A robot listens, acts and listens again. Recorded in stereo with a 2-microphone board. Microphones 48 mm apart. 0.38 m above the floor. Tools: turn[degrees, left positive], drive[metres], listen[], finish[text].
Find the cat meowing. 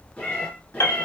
Thought: The cat meowing: about 35° left or 145° left.
Action: turn[35]
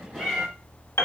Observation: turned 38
Action: finish[Facing the cat meowing, 1 to 2 m away.]